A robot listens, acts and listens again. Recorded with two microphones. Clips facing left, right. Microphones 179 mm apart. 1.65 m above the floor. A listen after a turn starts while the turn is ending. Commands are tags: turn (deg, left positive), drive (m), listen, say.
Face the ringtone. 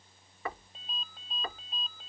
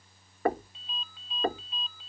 <turn deg="50"/>
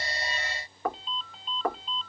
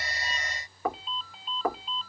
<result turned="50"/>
<say>Found it: a ringtone, straight ahead.</say>